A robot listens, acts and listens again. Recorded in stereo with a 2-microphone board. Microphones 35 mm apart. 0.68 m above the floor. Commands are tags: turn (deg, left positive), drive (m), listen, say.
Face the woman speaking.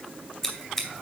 <listen/>
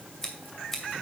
<listen/>
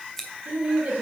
<turn deg="-45"/>
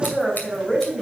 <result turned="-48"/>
<say>Found it: a woman speaking, straight ahead, 2 to 4 m away.</say>